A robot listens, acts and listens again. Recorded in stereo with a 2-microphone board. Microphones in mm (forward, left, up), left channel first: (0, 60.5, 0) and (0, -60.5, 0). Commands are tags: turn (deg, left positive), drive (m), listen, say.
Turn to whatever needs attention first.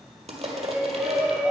<turn deg="-30"/>
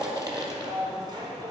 <turn deg="-140"/>
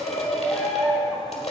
<say>Facing the shout.</say>